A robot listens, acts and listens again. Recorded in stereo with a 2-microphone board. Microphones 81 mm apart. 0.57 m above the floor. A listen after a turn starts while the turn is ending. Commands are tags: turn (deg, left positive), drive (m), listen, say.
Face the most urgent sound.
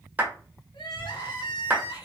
<turn deg="90"/>
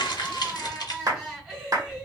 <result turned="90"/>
<turn deg="-10"/>
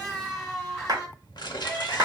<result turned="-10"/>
<say>Found it: crying, straight ahead, 1 to 2 m away.</say>